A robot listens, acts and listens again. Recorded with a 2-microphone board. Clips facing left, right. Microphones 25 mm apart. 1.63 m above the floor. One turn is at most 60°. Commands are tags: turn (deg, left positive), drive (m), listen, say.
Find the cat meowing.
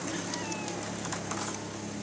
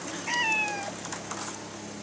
<turn deg="-60"/>
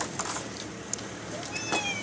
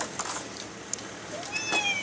<turn deg="-20"/>
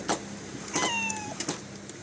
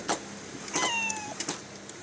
<say>Found it: a cat meowing, straight ahead.</say>